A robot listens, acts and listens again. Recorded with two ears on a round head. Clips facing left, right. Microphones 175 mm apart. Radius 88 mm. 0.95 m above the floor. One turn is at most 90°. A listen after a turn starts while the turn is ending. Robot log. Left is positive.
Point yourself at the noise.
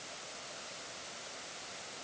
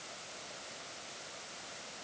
cmd idle
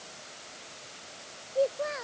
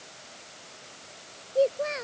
note: The child speaking: about 35° right or 145° right.
cmd yaw -35
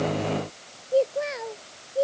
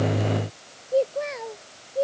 end: Facing the child speaking.